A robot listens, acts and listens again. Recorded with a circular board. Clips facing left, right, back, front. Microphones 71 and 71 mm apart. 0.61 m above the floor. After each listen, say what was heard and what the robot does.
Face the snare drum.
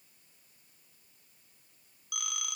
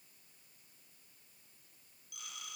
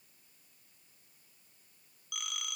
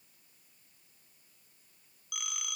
Keep listening.
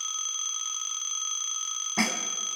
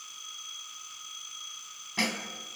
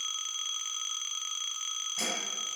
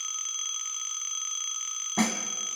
The snare drum: 25° left. Turn 25° left.
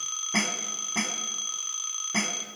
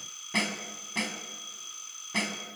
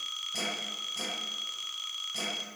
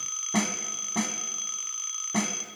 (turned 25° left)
The snare drum is now 15° left. Turn 15° left.
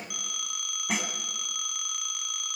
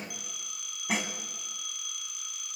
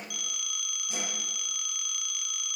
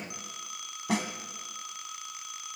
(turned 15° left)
Facing the snare drum.